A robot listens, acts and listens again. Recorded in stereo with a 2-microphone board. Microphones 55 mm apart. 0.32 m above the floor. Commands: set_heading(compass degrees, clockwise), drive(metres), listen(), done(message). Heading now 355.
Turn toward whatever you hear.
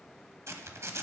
set_heading(55)
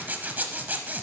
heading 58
set_heading(98)
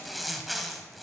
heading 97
done("Found it: a zipper, straight ahead.")